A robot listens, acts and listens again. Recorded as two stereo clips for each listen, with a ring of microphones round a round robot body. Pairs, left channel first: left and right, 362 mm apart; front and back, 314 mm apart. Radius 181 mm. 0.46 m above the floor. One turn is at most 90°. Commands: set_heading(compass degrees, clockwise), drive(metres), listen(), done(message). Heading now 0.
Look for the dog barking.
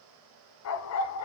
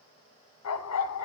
set_heading(320)
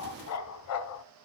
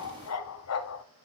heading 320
set_heading(280)
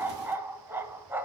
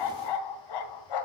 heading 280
done("Found it: a dog barking, straight ahead, 1 to 2 m away.")